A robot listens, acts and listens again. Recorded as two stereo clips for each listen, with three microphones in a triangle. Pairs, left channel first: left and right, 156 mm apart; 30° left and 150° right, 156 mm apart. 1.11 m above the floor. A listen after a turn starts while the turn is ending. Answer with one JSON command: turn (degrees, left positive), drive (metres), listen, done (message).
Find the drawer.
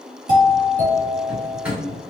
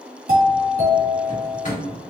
{"turn": -10}
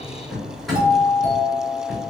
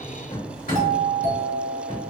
{"done": "Facing the drawer."}